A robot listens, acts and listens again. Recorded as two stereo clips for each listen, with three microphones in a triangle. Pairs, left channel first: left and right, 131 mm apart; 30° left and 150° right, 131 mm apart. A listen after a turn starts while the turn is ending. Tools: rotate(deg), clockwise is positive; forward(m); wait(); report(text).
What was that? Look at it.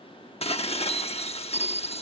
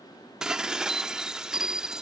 rotate(-125)
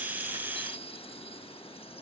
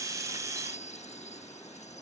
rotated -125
rotate(-50)
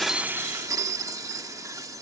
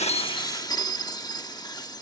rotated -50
rotate(30)
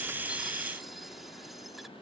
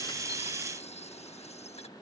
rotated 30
wait()
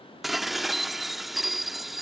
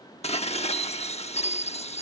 report("Found it: dishes clattering, straight ahead.")